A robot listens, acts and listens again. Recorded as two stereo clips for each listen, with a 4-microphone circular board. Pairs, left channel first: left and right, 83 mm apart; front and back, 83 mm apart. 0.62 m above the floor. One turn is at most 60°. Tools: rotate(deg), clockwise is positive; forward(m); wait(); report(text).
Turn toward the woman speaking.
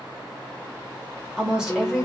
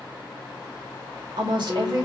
rotate(60)
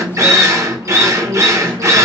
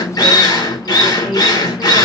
rotate(60)
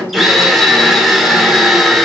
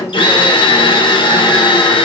rotate(45)
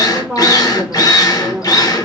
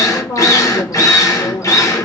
rotate(20)
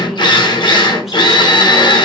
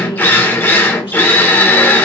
wait()
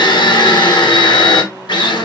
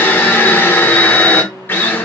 wait()
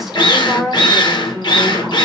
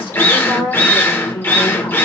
report("Facing the woman speaking, 1 to 2 m away.")